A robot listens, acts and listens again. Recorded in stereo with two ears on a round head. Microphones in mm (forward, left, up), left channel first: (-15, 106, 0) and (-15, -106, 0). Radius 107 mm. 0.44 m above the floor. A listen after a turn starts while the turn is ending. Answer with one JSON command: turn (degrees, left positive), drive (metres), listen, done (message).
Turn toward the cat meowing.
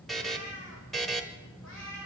{"turn": 60}
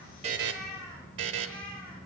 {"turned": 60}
{"done": "Facing the cat meowing, over 4 m away."}